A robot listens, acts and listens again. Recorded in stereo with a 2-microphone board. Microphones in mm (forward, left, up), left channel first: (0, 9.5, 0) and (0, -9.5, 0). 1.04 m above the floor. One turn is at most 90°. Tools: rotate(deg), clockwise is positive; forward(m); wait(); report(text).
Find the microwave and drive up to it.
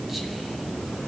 wait()
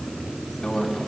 rotate(-35)
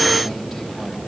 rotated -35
wait()
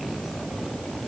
wait()
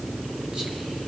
report("I heard a microwave, but can't make it out now. It was about straight ahead or 110° left. I did not reach it.")